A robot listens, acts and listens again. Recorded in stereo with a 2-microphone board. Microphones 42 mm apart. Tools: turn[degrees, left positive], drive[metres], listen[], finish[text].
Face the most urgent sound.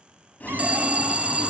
Thought: The alarm: about 30° right or 150° right.
Action: turn[-30]
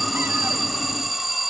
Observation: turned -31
Action: finish[Found it: an alarm, straight ahead.]